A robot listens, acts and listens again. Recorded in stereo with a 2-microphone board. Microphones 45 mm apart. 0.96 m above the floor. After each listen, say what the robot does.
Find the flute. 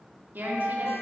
Turn 30° right.
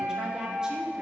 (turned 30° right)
Turn 120° right.
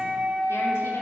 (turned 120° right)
Turn 25° right.
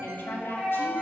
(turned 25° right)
Turn 15° left.
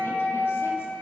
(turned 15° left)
Found it: a flute, straight ahead, 2 to 4 m away.